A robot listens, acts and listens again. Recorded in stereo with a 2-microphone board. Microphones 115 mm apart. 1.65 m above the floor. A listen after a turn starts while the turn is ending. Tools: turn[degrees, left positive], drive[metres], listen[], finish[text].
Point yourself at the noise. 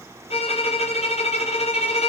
Thought: The violin: about 60° left or 120° left.
Action: turn[60]
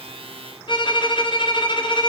Thought: So it is at 50° left.
Action: turn[50]
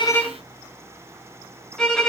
Action: finish[Found it: a violin, straight ahead, 1 to 2 m away.]